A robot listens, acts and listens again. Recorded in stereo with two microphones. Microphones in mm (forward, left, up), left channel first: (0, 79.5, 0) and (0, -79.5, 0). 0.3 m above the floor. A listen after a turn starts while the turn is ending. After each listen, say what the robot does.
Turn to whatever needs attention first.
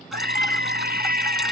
Turn 70° right.
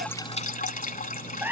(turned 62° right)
Turn 10° right.
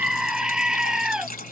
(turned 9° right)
Found it: a scream, straight ahead.